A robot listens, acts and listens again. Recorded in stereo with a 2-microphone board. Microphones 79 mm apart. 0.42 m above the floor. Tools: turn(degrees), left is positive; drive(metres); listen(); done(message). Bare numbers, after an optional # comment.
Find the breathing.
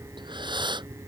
# The breathing: about 75° right or 105° right.
turn(-75)
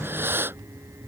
# So it is at 30° right.
turn(-30)
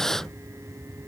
done("Found it: breathing, straight ahead.")